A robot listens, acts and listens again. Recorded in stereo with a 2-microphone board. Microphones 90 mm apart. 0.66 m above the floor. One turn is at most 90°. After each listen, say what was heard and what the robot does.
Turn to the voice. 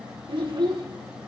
The child speaking: about 65° right or 115° right. Turn 65° right.
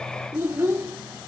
So it is at 30° right. Turn 30° right.
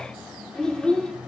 The child speaking is now 10° left. Turn 10° left.
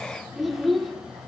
Facing the child speaking, 1 to 2 m away.